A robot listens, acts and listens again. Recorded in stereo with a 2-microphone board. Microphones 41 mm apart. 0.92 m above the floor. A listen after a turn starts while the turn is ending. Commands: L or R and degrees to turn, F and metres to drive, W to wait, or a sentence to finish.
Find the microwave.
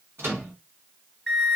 R65
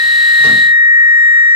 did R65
W
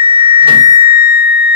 W
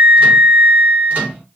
R40
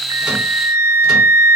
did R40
W
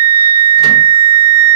W
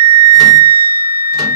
I heard a microwave from this way, but can't make it out now.